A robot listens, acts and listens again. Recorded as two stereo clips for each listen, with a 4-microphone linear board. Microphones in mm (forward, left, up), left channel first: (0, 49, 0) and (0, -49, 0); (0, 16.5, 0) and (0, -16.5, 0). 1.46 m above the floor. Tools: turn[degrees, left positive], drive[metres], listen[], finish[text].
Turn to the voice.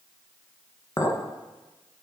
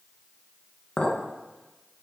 Action: listen[]
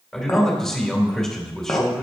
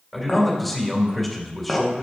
Action: turn[30]
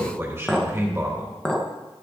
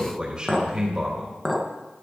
Thought: So it is at 25° right.
Action: turn[-25]
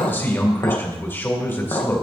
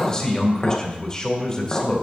Thought: The man speaking is now 20° left.
Action: turn[20]
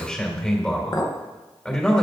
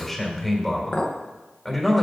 Thought: The man speaking is now 10° left.
Action: turn[10]
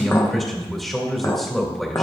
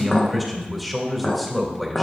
Action: finish[Found it: a man speaking, straight ahead, 2 to 4 m away.]